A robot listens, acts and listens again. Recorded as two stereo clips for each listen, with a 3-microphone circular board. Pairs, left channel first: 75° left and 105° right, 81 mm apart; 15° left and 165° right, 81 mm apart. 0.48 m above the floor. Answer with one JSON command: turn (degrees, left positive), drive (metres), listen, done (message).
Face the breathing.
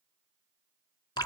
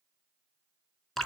{"listen": true}
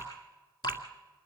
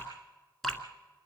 {"listen": true}
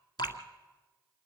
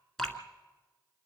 {"done": "I can't make out breathing, only dripping."}